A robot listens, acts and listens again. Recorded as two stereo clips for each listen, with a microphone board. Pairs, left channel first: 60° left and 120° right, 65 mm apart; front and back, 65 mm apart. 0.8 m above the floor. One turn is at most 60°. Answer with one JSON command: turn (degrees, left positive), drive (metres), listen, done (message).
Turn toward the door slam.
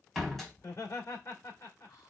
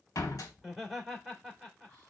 {"turn": -30}
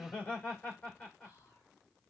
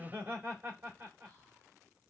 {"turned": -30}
{"done": "I heard a door slam from this way, but can't make it out now."}